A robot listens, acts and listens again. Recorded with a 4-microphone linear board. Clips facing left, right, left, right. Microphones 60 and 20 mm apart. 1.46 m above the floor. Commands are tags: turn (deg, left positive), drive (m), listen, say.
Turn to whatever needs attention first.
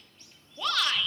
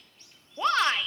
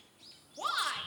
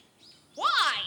<turn deg="-35"/>
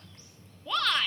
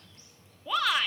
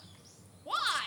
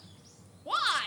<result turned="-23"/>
<turn deg="-10"/>
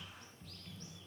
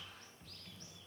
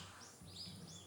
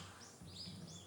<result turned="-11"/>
<listen/>
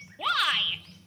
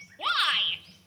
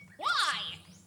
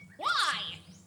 <say>Found it: a shout, straight ahead, 1 to 2 m away.</say>